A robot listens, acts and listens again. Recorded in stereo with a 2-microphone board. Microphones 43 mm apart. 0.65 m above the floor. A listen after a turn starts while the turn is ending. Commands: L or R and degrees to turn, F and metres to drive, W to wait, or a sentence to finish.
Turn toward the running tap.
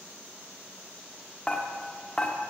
W
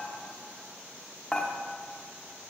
W
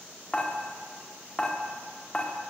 I can't make out a running tap, only dishes clattering.